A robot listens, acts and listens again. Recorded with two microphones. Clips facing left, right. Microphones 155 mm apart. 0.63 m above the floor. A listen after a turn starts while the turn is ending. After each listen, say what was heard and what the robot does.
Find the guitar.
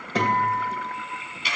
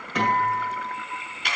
The guitar: about 35° left or 145° left. Turn 35° left.
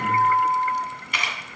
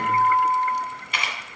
So it is at 115° left. Turn 115° left.
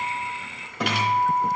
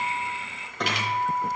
Found it: a guitar, straight ahead.